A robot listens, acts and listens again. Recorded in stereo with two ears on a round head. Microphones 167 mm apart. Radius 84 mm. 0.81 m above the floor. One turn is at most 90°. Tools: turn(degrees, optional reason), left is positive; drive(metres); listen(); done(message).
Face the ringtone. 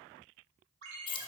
turn(degrees=-70, reason="The ringtone: about 70° right or 110° right.")
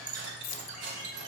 listen()
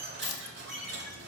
listen()
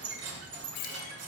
done("I heard a ringtone, but can't make it out now. It was about straight ahead or 40° right.")